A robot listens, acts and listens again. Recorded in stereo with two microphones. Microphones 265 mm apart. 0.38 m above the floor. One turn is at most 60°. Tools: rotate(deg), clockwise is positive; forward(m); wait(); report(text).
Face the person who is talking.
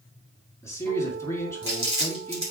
rotate(-30)
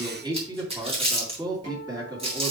rotate(15)
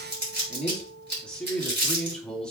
report("Facing the man speaking, 2 to 4 m away.")